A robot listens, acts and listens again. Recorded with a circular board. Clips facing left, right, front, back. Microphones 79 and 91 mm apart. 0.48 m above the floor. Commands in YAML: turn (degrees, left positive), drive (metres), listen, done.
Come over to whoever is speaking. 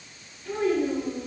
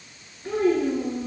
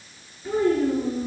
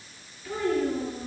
turn: -55
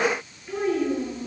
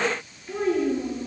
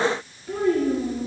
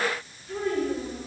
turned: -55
drive: 1.0
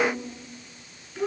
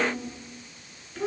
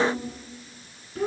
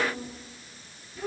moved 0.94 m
turn: 10
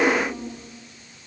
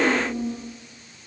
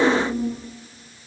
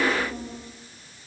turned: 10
drive: 1.0
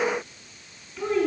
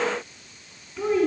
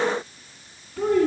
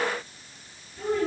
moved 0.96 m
drive: 1.0
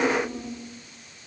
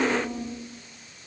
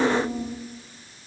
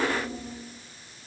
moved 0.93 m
drive: 1.0
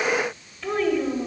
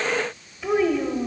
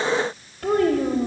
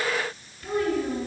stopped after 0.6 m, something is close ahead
turn: -10
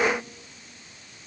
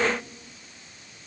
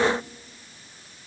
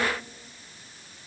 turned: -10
listen: true
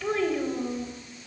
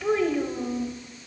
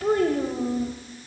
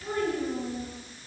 done: "I am next to the child speaking."